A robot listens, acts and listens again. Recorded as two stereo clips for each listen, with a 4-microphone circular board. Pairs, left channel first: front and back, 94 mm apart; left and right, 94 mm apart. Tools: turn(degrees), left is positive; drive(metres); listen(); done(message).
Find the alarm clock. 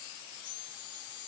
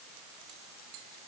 listen()
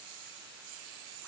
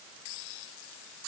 listen()
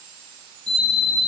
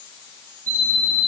turn(degrees=-25)
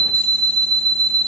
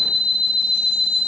done("Facing the alarm clock, under 1 m away.")